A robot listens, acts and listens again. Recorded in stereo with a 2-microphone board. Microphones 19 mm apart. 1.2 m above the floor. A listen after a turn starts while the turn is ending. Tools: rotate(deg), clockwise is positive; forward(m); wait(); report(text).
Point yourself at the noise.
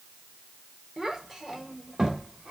rotate(30)
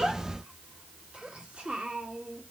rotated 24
rotate(110)
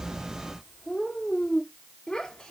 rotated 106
rotate(-45)
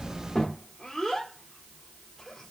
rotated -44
rotate(-10)
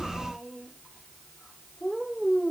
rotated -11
report("Found it: a child speaking, straight ahead.")